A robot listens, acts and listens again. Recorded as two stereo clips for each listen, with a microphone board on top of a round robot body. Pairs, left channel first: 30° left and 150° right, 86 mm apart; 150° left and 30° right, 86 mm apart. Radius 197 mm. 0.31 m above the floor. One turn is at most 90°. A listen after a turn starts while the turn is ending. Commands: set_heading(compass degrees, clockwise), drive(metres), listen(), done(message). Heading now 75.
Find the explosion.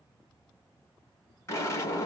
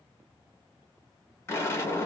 set_heading(345)
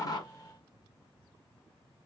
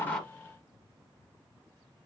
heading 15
set_heading(345)
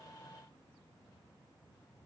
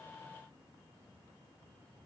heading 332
set_heading(347)
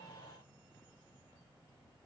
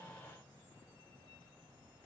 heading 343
done("Facing where the explosion came from. I can't hear it now.")